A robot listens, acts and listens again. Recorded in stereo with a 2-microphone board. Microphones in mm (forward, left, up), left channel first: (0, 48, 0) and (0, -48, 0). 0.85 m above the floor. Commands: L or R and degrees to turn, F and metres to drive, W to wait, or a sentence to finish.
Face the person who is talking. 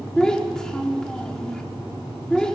L30
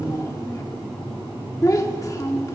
L145
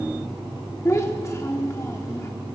L30
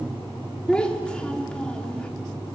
L10
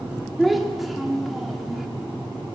Facing the child speaking.